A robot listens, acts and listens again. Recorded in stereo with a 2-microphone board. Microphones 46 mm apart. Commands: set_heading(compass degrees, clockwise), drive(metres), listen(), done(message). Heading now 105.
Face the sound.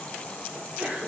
set_heading(140)
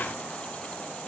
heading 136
listen()
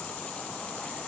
done("I heard a sneeze, but can't make it out now. It was about 5° right or 115° right.")